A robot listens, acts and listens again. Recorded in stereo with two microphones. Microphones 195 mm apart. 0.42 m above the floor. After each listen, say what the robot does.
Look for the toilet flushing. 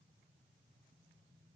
Keep listening.
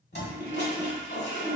Turn 60° left.
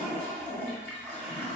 Facing the toilet flushing, under 1 m away.